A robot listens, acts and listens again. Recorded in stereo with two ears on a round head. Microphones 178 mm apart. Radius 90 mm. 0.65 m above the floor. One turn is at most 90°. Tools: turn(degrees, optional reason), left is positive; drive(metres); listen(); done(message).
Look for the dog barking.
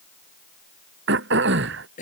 listen()
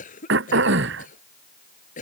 listen()
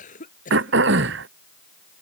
done("I can't make out a dog barking to turn to.")